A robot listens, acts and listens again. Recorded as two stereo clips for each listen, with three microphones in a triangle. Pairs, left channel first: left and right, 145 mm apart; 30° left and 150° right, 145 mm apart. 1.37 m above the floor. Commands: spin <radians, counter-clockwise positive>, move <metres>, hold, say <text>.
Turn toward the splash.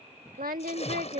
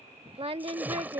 spin 2.27
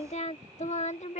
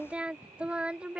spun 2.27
say I heard a splash from this way, but can't make it out now.